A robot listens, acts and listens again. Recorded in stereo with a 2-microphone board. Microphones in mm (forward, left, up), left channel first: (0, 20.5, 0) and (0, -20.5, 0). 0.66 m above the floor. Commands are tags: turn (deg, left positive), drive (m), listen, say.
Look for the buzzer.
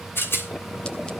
<listen/>
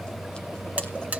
<turn deg="-40"/>
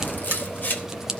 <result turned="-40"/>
<listen/>
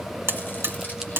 <turn deg="-100"/>
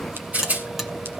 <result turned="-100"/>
<listen/>
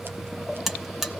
<turn deg="-10"/>
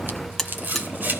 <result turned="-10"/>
<say>Found it: a buzzer, straight ahead.</say>